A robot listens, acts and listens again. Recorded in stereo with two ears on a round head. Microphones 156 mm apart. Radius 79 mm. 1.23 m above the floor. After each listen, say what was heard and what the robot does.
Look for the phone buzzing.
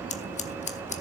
Keep listening.
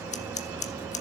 Keep listening.
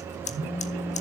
Turn 30° left.
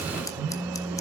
So it is at 25° right. Turn 25° right.
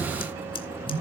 The phone buzzing is now 15° right. Turn 15° right.
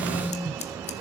Found it: a phone buzzing, straight ahead.